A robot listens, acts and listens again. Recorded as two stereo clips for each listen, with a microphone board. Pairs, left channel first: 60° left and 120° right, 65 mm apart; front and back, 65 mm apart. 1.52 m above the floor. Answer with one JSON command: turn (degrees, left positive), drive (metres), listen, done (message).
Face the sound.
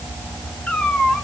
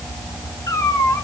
{"turn": -10}
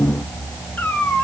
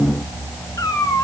{"done": "Found it: a cat meowing, straight ahead."}